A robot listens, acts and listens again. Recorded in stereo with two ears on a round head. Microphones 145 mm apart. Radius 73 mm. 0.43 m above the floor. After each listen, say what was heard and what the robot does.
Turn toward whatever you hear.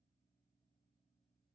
Keep listening.
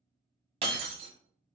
The breaking glass: about 35° right or 145° right. Turn 35° right.
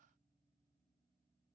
Keep listening.
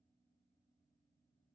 I heard breaking glass, but can't make it out now. It was about straight ahead or 110° right.